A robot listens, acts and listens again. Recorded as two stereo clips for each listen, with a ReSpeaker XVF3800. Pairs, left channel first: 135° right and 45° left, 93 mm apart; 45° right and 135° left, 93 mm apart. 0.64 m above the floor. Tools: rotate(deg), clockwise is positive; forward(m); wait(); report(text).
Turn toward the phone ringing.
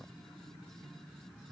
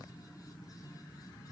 wait()
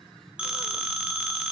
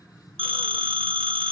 rotate(-125)
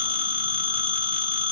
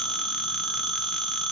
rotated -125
rotate(-40)
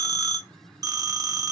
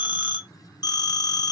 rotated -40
report("Facing the phone ringing.")